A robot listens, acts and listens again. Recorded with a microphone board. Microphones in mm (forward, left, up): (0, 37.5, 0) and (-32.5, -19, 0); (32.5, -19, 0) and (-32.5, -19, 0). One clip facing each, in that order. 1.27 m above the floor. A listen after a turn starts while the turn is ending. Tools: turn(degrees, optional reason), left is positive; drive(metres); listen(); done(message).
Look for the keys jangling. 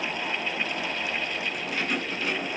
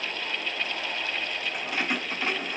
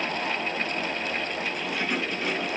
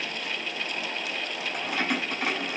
turn(degrees=-175, reason="The keys jangling: 175° right.")
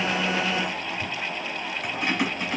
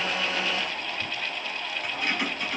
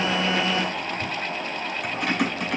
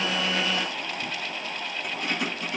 turn(degrees=-10, reason="The keys jangling is now 10° right.")
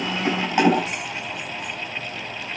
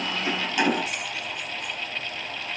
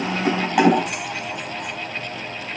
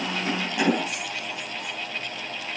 done("Found it: keys jangling, straight ahead.")